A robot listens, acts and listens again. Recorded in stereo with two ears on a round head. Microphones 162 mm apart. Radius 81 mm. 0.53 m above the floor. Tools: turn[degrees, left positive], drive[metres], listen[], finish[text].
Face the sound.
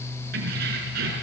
Thought: The keys jangling: about 60° right or 120° right.
Action: turn[-60]
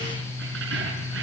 Thought: So it is at 75° right.
Action: turn[-75]
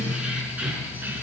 Thought: The keys jangling is now 10° right.
Action: turn[-10]
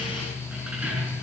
Thought: The keys jangling is now 10° right.
Action: turn[-10]
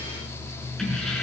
Action: finish[Found it: keys jangling, straight ahead, over 4 m away.]